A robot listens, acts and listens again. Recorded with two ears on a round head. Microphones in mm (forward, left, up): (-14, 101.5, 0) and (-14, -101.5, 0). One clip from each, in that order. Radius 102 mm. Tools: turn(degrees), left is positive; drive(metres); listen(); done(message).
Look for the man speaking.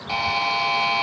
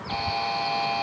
listen()
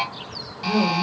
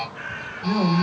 turn(degrees=-25)
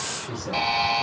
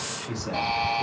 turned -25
done("Facing the man speaking.")